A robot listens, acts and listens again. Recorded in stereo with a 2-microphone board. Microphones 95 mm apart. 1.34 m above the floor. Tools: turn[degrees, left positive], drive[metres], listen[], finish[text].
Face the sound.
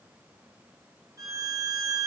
Thought: The violin: about 35° right or 145° right.
Action: turn[-35]
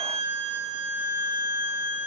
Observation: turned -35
Thought: So it is at 110° right.
Action: turn[-110]
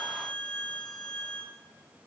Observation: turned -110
Thought: The violin is now 10° left.
Action: turn[10]
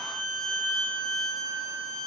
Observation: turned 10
Action: finish[Found it: a violin, straight ahead, 1 to 2 m away.]